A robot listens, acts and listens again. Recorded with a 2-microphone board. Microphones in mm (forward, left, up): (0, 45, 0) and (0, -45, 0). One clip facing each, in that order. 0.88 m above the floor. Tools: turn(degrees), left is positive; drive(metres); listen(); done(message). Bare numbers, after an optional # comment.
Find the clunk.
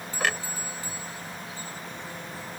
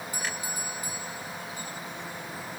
turn(90)
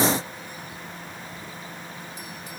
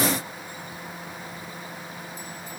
done("Facing where the clunk came from. I can't hear it now.")